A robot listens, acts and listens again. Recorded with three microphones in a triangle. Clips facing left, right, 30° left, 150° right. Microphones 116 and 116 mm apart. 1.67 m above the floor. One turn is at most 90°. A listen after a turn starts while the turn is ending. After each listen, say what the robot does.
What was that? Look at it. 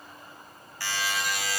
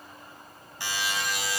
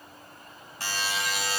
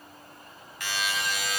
Turn 25° right.
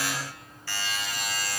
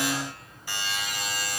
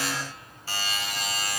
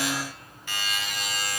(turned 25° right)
Turn 20° right.
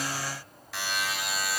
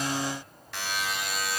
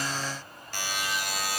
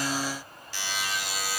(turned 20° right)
Found it: a buzzer, straight ahead, 1 to 2 m away.